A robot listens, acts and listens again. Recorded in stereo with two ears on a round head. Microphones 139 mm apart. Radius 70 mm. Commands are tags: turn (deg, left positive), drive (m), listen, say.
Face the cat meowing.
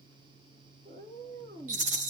<turn deg="-50"/>
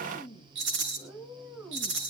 <turn deg="-10"/>
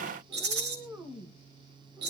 <turn deg="-10"/>
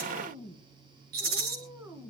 <turn deg="-15"/>
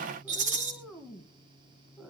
<say>Facing the cat meowing, 1 to 2 m away.</say>